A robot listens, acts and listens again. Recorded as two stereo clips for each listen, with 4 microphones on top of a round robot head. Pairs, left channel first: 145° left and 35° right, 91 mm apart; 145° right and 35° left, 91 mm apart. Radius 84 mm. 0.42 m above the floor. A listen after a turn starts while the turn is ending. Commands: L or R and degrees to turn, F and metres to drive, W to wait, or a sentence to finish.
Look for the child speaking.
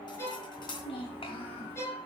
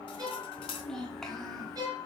L130
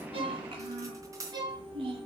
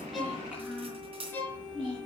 R45
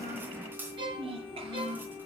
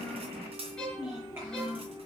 R30
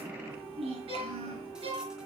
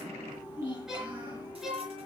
R20
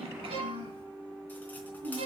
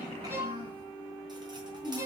L10
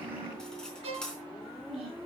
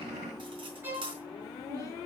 Found it: a child speaking, straight ahead.